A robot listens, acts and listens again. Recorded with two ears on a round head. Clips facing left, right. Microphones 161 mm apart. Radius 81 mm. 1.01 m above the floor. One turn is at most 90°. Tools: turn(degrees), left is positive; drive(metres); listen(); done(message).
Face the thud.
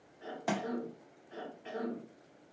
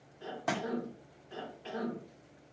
turn(degrees=30)
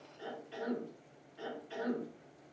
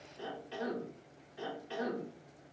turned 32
listen()
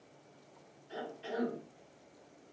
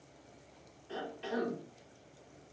done("I heard a thud, but can't make it out now. It was about 30° right or 145° left.")